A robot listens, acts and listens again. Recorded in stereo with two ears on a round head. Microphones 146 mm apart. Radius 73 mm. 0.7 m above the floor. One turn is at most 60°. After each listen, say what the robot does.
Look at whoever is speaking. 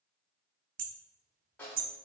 Keep listening.
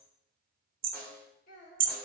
Turn 55° left.
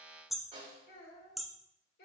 Turn 60° left.
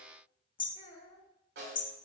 Turn 30° left.
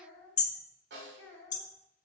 Turn 15° left.
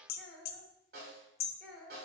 Found it: a child speaking, straight ahead, 2 to 4 m away.